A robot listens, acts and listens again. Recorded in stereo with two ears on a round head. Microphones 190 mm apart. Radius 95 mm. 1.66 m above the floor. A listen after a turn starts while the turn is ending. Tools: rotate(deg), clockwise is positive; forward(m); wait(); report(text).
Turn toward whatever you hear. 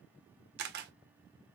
rotate(50)
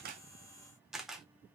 report("Found it: a camera shutter, straight ahead, under 1 m away.")